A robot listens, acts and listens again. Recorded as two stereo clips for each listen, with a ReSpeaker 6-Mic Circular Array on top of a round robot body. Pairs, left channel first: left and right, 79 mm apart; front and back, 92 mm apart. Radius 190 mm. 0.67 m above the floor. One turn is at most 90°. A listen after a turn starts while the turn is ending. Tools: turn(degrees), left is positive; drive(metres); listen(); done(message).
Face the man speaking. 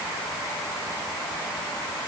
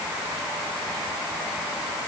listen()
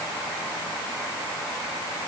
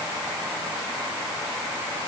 listen()
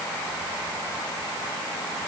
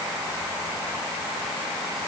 done("I can't make out a man speaking.")